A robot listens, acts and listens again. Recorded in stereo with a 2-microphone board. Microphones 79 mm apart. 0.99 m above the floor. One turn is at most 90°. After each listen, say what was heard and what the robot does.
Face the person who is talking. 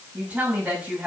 The woman speaking: about 15° right or 165° right. Turn 15° right.
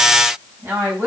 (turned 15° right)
So it is at 150° right. Turn 90° right.
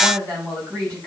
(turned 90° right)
The woman speaking is now 45° right. Turn 45° right.
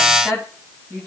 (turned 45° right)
The woman speaking is now 15° right. Turn 15° right.
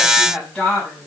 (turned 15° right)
Found it: a woman speaking, straight ahead, over 4 m away.